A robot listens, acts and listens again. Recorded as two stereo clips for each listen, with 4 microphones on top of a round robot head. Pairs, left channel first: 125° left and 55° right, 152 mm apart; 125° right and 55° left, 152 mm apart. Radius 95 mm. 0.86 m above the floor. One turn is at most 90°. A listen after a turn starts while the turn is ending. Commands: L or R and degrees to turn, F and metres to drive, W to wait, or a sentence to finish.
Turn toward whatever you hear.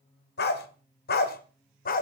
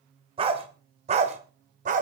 L90
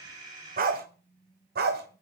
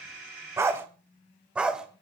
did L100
R30
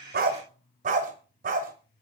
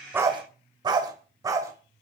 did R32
R15
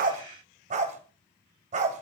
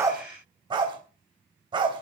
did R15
R10
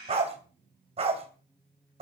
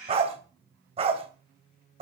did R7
Found it: a dog barking, straight ahead.